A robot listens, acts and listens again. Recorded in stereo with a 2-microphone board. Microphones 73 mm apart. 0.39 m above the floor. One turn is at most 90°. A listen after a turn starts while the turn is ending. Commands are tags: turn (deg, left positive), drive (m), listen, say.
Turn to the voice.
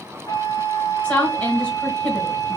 <turn deg="20"/>
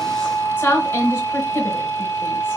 <turn deg="90"/>
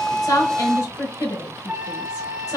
<turn deg="70"/>
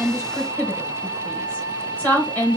<turn deg="30"/>
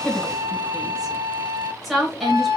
<say>Facing the woman speaking, 1 to 2 m away.</say>